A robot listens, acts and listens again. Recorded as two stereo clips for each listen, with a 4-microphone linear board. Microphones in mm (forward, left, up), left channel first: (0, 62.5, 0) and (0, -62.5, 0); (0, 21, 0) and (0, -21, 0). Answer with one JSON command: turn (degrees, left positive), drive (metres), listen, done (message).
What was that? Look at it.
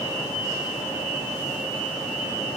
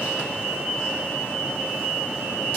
{"listen": true}
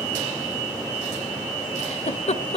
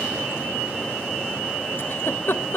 {"turn": 55}
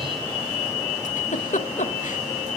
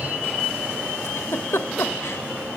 {"turn": 75}
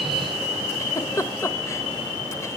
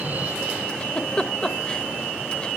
{"turn": 20}
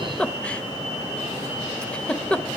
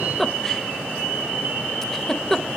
{"turn": 10}
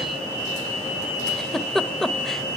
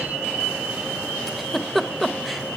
{"done": "Found it: a giggle, straight ahead, 1 to 2 m away."}